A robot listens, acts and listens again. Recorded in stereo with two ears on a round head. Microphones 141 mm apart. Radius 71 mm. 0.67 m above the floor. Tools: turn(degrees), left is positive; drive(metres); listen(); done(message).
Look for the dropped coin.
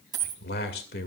turn(degrees=-25)
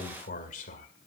listen()
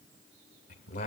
done("I heard a dropped coin, but can't make it out now. It was about straight ahead or 130° right.")